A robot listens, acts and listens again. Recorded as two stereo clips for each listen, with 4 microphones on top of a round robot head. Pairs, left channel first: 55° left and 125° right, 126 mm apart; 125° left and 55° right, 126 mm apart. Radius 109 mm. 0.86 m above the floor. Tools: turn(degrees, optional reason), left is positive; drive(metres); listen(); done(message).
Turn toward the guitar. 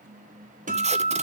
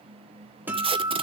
turn(degrees=-130, reason="The guitar: 130° right.")
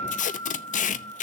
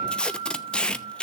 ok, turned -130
turn(degrees=15, reason="The guitar is now 15° left.")
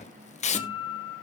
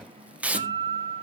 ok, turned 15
done("Found it: a guitar, straight ahead, 1 to 2 m away.")